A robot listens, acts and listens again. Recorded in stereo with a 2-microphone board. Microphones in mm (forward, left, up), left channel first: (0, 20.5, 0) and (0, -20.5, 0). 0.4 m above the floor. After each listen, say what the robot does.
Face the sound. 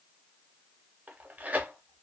Turn 40° right.
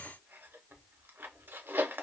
Turn 90° right.
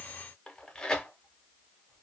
Turn 20° left.
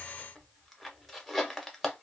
Facing the tearing paper.